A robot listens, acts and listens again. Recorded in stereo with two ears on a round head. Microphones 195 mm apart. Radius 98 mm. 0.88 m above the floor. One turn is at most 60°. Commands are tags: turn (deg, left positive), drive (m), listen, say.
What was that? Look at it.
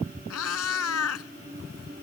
<turn deg="60"/>
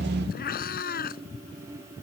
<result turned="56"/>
<turn deg="45"/>
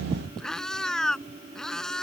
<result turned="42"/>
<say>Found it: a cat meowing, straight ahead.</say>